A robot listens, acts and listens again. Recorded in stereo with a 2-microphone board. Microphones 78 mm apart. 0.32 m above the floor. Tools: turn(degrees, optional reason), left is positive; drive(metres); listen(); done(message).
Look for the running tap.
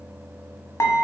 listen()
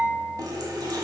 turn(degrees=-60, reason="The running tap: about 60° right or 120° right.")
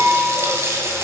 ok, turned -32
turn(degrees=-40, reason="So it is at 40° right.")
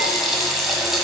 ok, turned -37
done("Found it: a running tap, straight ahead, 1 to 2 m away.")